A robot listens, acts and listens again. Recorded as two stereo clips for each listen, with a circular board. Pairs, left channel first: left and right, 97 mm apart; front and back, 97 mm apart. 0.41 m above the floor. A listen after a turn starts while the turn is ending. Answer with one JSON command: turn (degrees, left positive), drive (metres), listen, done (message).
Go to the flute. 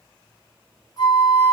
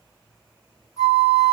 {"turn": 55}
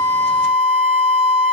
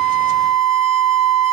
{"drive": 1.0}
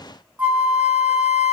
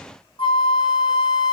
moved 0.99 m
{"turn": -10}
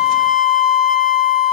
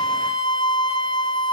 {"drive": 1.0}
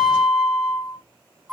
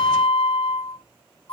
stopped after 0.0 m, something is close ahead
{"done": "I am next to the flute."}